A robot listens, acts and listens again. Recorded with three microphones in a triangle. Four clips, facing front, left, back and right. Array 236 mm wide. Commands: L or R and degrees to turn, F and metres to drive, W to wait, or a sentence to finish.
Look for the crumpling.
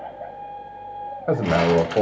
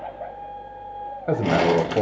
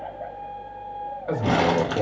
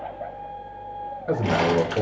L120
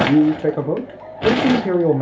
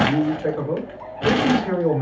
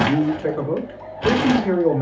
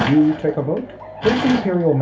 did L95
L25
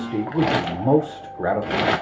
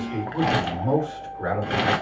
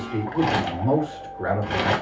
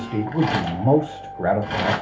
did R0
L25
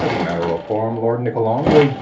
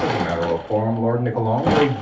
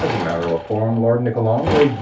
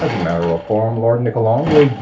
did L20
Facing the crumpling.